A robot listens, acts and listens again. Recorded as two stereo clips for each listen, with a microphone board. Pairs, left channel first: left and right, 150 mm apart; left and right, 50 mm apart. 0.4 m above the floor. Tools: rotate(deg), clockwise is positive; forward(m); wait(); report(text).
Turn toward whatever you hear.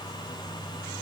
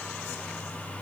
wait()
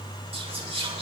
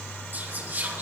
rotate(40)
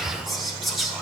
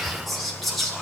report("Facing the whispering, over 4 m away.")